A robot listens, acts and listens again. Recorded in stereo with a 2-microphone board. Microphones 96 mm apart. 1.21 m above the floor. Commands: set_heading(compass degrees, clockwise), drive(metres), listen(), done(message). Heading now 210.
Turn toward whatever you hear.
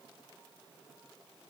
listen()
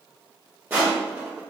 set_heading(230)
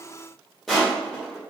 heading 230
done("Facing the crushing, 1 to 2 m away.")